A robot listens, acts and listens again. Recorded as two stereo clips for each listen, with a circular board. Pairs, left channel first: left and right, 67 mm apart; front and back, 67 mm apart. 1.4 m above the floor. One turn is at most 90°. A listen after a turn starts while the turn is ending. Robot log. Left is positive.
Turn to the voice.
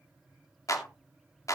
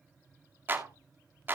cmd idle
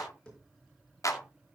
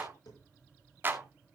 cmd idle
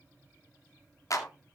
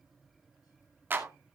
end: I can't make out anyone speaking to turn to.